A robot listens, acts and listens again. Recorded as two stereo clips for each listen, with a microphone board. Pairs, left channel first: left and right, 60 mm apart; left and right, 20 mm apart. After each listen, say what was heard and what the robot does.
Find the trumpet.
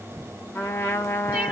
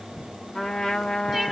The trumpet: about 40° left or 140° left. Turn 40° left.
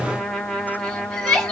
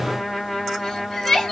So it is at 10° left. Turn 10° left.
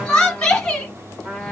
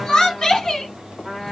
Facing the trumpet.